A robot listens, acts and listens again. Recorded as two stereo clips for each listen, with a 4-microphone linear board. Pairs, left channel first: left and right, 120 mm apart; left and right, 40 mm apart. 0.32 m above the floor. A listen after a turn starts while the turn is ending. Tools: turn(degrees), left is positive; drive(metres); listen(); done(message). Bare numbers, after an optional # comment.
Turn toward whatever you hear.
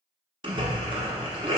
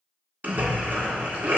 # The splash: about 45° right or 135° right.
turn(-45)
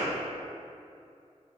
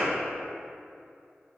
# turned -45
listen()
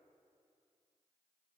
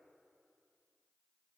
done("I heard a splash, but can't make it out now. It was about straight ahead or 90° right.")